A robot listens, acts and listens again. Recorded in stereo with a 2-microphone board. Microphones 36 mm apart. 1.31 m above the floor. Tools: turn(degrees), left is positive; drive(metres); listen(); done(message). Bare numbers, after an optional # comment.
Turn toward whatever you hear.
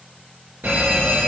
# The fire alarm: about 55° right or 125° right.
turn(-55)
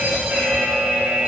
# So it is at 60° right.
turn(-60)
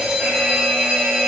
# The fire alarm is now 25° right.
turn(-25)
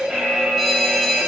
done("Facing the fire alarm.")